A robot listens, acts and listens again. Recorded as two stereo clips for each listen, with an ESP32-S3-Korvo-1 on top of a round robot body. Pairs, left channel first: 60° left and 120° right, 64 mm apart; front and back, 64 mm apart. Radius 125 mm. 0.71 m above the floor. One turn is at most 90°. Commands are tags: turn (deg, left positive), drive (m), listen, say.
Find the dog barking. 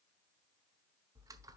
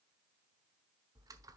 <listen/>
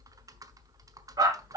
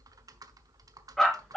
<turn deg="-80"/>
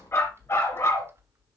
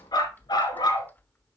<turn deg="15"/>
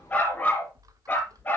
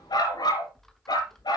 <say>Found it: a dog barking, straight ahead, over 4 m away.</say>